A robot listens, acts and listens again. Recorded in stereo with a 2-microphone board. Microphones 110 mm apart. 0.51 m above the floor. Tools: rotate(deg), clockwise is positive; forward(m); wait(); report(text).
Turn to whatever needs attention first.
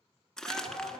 rotate(30)
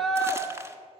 report("Found it: a shout, straight ahead.")